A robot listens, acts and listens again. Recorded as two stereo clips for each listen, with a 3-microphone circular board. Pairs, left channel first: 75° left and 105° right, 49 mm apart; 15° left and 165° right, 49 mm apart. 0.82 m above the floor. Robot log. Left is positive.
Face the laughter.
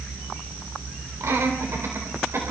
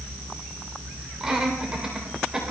note: The laughter: 85° right.
cmd yaw -85
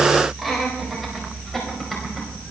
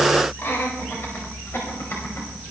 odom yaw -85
note: The laughter is now 15° right.
cmd yaw -15
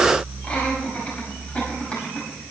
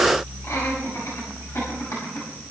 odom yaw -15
note: The laughter is now 10° left.
cmd yaw +10
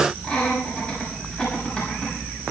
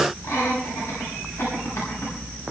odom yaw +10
end: Facing the laughter, over 4 m away.